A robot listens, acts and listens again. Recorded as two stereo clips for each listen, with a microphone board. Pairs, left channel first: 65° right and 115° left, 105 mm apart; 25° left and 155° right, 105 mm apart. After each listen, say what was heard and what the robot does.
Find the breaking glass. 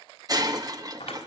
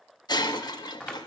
The breaking glass: 65° left. Turn 65° left.
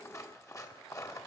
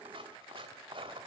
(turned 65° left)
Facing where the breaking glass came from. I can't hear it now.